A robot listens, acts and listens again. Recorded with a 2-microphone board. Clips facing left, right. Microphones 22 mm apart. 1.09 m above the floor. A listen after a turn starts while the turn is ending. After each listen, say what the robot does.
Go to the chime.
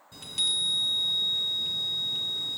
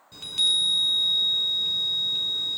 Turn 20° right.
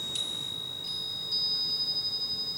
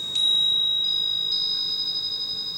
Turn 140° right.
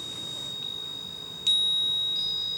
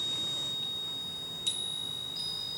Turn 30° left.
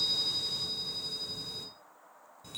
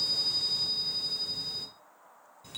Drive 1.0 m forward.
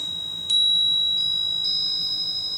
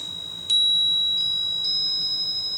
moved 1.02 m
Drive 1.0 m forward.
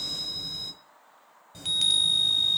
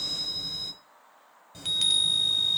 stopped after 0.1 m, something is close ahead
Arrived at the chime, straight ahead.